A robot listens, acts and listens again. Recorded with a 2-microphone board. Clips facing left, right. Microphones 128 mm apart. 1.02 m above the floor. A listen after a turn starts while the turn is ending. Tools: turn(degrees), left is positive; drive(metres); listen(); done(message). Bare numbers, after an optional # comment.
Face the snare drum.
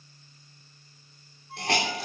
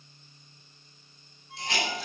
listen()
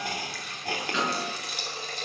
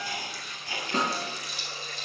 # The snare drum: about 50° right or 130° right.
turn(-50)
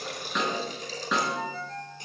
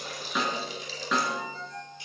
done("Facing the snare drum, 2 to 4 m away.")